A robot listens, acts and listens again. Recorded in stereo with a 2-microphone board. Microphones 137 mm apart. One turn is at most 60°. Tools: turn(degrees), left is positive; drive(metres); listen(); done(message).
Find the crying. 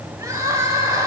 turn(degrees=-20)
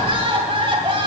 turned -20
turn(degrees=-60)
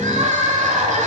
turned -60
turn(degrees=-60)
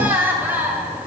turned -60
turn(degrees=-15)
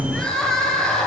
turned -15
done("Facing the crying, 1 to 2 m away.")